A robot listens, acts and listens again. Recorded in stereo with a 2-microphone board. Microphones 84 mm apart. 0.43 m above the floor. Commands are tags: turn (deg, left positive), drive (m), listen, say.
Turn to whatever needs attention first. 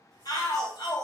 <turn deg="50"/>
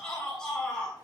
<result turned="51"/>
<turn deg="10"/>
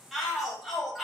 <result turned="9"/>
<say>Found it: a shout, straight ahead.</say>